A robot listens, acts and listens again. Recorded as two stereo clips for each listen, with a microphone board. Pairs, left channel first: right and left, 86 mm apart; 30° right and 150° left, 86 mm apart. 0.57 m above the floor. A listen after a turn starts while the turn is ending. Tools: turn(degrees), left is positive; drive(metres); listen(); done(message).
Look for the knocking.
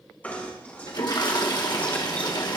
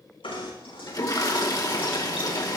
turn(degrees=-20)
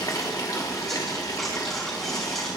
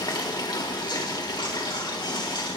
done("Found it: knocking, straight ahead, over 4 m away.")